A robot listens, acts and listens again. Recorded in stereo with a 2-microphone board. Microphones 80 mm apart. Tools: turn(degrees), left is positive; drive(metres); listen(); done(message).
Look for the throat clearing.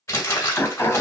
turn(degrees=25)
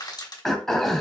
done("Facing the throat clearing.")